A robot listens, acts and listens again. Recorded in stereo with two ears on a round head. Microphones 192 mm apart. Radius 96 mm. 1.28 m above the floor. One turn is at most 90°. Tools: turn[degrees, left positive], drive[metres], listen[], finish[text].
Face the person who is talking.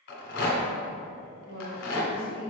Thought: The woman speaking: about 40° right or 140° right.
Action: turn[-40]
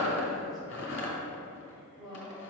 Action: finish[Found it: a woman speaking, straight ahead.]